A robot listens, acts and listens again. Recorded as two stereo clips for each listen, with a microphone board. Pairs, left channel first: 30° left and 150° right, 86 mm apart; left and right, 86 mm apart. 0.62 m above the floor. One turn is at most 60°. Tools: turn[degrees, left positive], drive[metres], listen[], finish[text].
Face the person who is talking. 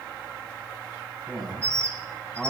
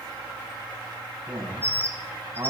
Thought: The man speaking: 55° right.
Action: turn[-55]
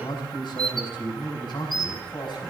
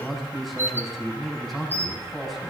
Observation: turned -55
Action: finish[Found it: a man speaking, straight ahead, over 4 m away.]